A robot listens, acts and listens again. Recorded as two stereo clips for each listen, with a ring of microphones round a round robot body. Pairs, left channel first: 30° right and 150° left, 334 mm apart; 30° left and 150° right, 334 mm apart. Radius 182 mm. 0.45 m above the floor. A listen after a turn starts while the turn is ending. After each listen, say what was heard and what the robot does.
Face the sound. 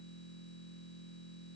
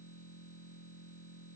Keep listening.
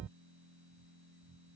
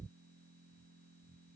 Keep listening.
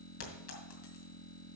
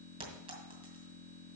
The clink: 75° right. Turn 75° right.
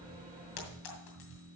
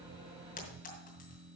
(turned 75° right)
The clink is now 35° right. Turn 35° right.
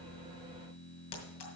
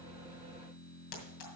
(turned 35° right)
Facing the clink, 2 to 4 m away.